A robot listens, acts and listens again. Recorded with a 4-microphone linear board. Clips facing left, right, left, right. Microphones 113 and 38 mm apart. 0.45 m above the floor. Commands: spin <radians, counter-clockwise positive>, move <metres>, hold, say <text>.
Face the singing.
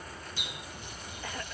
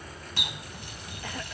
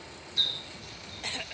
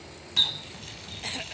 hold
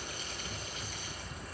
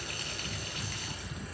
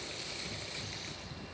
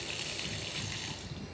hold
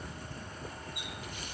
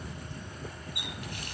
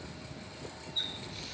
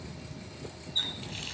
say I can't make out singing to turn to.